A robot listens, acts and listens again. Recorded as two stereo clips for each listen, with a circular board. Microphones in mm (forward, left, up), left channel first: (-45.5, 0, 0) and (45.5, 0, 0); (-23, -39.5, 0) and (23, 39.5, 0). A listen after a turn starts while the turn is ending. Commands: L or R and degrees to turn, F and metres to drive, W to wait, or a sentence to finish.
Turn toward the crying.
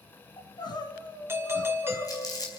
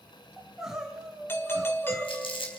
L145
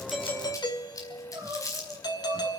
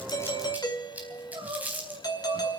L50
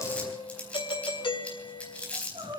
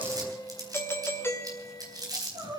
L20
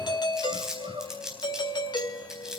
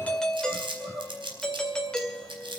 Facing the crying.